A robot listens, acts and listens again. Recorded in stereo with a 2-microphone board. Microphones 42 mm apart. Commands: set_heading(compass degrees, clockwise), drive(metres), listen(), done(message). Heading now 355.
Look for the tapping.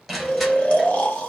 listen()
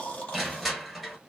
listen()
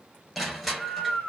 done("I can't make out tapping, only snoring and crushing.")